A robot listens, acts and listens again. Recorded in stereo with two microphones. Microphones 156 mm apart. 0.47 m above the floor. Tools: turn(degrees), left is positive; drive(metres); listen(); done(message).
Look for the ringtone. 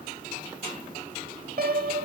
listen()
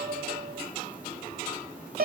listen()
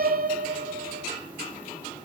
done("I can't make out a ringtone, only a piano.")